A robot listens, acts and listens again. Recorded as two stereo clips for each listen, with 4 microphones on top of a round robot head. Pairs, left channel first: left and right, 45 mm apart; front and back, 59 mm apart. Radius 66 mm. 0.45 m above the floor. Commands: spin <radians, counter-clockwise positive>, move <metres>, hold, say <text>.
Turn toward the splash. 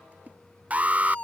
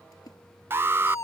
spin -0.44
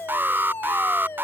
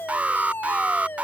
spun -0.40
say I heard a splash from this way, but can't make it out now.